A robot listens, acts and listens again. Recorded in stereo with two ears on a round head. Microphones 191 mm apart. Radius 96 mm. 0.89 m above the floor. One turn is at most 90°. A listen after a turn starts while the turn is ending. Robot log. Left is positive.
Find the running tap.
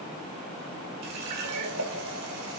cmd yaw -90
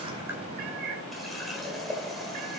end: Facing the running tap.